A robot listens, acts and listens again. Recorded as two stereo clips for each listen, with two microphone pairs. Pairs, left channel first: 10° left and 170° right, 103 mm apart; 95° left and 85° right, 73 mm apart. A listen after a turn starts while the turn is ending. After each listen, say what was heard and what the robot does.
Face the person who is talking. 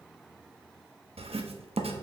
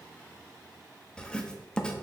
Keep listening.
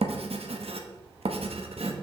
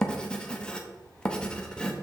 Keep listening.
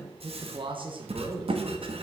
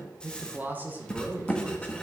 The man speaking: 145° right. Turn 145° right.
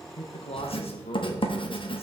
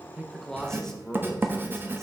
The man speaking is now 10° left. Turn 10° left.
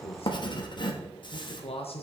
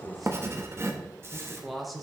Facing the man speaking, 1 to 2 m away.